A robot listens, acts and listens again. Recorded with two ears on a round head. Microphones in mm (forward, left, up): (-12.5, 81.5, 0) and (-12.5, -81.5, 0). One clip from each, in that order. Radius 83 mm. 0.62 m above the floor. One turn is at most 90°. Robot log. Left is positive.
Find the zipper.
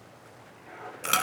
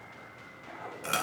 note: The zipper: about 20° right or 160° right.
cmd yaw -20
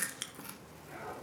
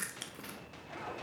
note: So it is at 140° right.
cmd yaw -90
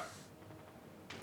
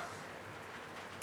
note: Nothing new. It was at 50° right.
cmd yaw -50
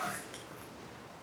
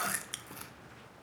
cmd idle
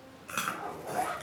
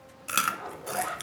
note: The zipper is now 25° right.
cmd yaw -25
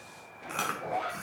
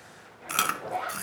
note: The zipper is now 10° right.
cmd yaw -10
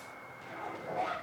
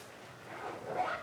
end: Facing the zipper, over 4 m away.